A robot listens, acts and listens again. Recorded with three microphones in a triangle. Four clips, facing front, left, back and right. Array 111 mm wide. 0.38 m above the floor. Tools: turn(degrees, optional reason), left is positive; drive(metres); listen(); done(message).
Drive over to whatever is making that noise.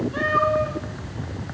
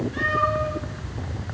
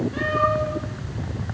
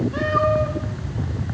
turn(degrees=-95, reason="The cat meowing: 95° right.")
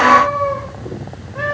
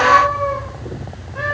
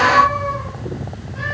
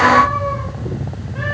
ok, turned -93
drive(metres=1.0)
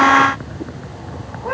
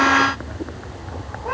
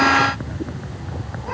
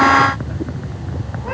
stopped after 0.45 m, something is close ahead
listen()
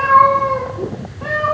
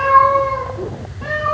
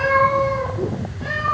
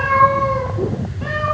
done("Something is in my way. I am facing the cat meowing but have not reached it.")